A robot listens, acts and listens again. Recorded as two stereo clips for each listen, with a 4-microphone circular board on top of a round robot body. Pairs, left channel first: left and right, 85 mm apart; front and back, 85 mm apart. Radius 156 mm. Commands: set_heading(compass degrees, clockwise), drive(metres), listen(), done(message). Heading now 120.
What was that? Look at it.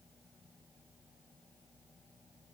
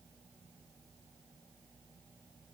listen()
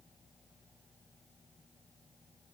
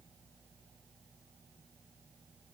listen()
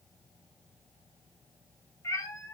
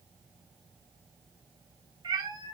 set_heading(335)
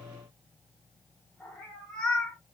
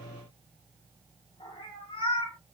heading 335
set_heading(325)
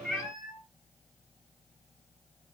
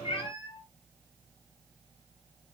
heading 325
done("Facing the cat meowing, 2 to 4 m away.")